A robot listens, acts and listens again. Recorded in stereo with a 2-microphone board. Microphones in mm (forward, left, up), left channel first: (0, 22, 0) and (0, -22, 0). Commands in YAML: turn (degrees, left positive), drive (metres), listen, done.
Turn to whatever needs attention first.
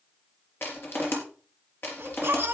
turn: -50
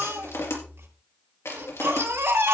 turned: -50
turn: -80
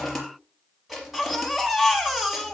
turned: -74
done: "Found it: a baby crying, straight ahead."